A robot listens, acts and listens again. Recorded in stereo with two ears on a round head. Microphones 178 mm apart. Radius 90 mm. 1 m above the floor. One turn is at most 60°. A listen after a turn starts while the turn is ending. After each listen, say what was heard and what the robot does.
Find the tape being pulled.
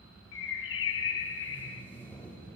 Turn 30° left.
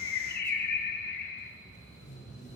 So it is at 140° left. Turn 60° left.
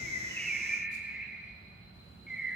Nothing new. It was at 80° left. Turn 60° left.
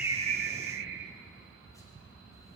Nothing new. It was at 20° left. Turn 20° left.
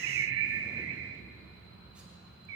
I heard tape being pulled from this way, but can't make it out now.